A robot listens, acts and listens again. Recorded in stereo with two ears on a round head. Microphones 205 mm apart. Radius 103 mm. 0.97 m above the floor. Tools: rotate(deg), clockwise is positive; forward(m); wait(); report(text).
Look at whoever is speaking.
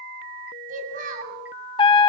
rotate(35)
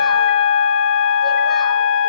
wait()
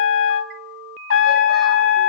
wait()
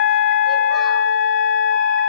report("I heard a child speaking, but can't make it out now. It was about straight ahead or 110° right.")